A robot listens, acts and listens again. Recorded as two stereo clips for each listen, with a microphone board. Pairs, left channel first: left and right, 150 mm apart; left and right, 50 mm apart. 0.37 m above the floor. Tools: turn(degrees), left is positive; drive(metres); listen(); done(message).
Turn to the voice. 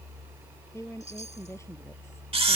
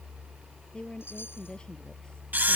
turn(degrees=20)
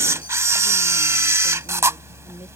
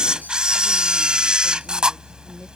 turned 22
listen()
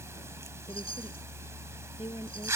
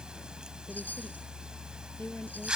turn(degrees=140)
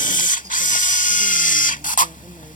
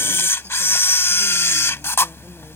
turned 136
listen()
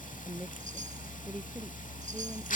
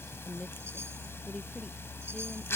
done("Facing the woman speaking.")